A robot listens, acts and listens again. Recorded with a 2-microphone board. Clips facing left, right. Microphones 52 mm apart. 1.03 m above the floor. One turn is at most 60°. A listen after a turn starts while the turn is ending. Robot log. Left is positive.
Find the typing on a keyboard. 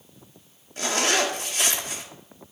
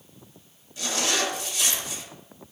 cmd idle
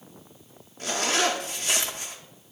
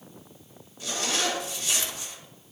cmd idle
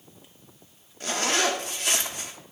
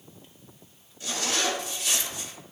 end: I can't make out typing on a keyboard to turn to.